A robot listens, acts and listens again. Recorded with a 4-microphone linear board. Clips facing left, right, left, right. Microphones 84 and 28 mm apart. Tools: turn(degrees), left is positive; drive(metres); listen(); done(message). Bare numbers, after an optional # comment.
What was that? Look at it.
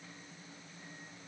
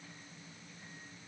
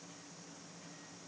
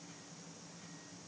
listen()
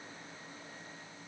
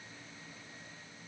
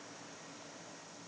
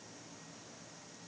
listen()
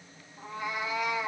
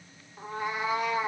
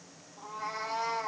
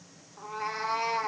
# The cat meowing: about 45° right or 135° right.
turn(-45)
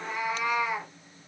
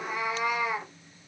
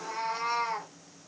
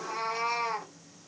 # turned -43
done("Found it: a cat meowing, straight ahead.")